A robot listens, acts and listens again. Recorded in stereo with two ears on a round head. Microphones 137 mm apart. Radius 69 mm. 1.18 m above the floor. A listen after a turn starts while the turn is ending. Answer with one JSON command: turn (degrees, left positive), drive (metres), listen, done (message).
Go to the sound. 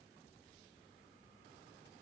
{"listen": true}
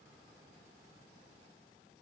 {"listen": true}
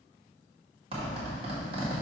{"turn": -40}
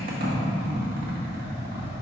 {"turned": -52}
{"turn": -90}
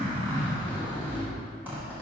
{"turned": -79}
{"turn": -10}
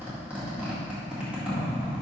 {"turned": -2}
{"turn": -10}
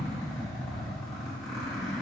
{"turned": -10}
{"drive": 1.0}
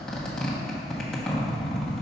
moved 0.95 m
{"drive": 1.0}
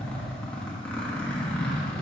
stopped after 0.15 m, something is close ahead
{"turn": 10}
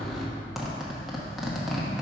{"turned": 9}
{"done": "Arrived at the zipper, straight ahead."}